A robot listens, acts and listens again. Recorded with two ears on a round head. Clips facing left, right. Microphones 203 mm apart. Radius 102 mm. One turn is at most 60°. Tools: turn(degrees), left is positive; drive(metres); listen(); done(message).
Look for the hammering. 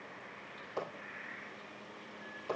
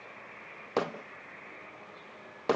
turn(degrees=-60)
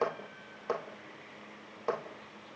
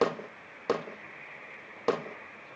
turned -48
turn(degrees=-45)
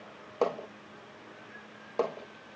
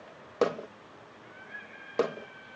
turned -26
turn(degrees=-20)
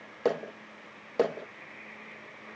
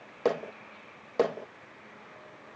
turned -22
done("Facing the hammering.")